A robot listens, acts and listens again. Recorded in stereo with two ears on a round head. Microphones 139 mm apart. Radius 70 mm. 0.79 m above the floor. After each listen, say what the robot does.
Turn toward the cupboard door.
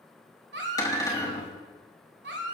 Turn 25° left.
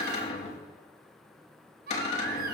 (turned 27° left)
Turn 130° left.
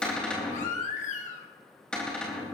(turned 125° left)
Found it: a cupboard door, straight ahead.